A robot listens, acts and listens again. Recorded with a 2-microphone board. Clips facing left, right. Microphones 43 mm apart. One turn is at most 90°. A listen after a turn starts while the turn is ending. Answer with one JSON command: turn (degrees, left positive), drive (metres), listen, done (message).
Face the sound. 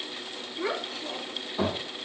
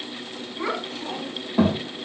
{"turn": -70}
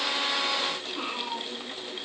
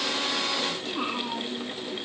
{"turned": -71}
{"turn": 20}
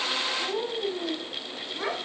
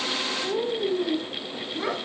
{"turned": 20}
{"turn": 25}
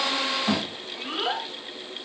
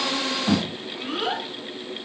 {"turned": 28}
{"done": "Found it: a child speaking, straight ahead, 2 to 4 m away."}